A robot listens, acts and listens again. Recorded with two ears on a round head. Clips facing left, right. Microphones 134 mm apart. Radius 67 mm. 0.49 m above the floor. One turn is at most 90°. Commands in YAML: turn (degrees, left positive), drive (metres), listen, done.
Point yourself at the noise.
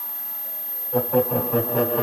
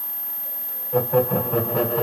turn: 30
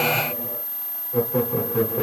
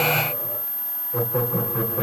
turn: 90
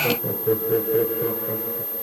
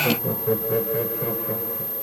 turn: 40
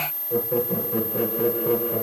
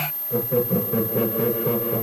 turn: 10
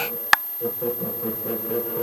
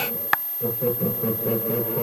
done: "Found it: laughter, straight ahead, over 4 m away."